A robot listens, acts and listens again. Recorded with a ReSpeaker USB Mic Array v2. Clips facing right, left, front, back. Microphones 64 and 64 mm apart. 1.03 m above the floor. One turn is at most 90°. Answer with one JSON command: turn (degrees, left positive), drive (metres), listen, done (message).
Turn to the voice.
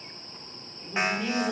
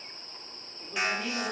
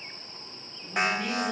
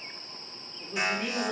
{"turn": 90}
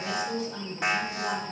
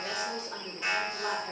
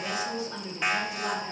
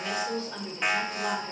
{"turn": 75}
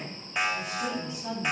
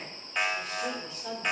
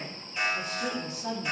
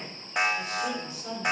{"turn": -10}
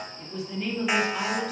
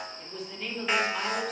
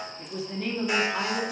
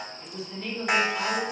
{"done": "Facing the woman speaking."}